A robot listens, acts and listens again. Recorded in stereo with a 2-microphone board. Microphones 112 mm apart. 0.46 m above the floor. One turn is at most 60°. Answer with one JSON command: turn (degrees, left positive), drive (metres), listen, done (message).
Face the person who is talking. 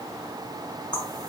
{"listen": true}
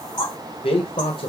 {"turn": 55}
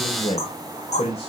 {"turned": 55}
{"turn": 60}
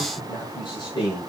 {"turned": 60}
{"turn": 45}
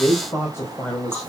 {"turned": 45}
{"turn": 20}
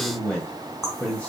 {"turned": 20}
{"turn": 10}
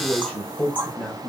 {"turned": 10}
{"done": "Found it: a man speaking, straight ahead, 2 to 4 m away."}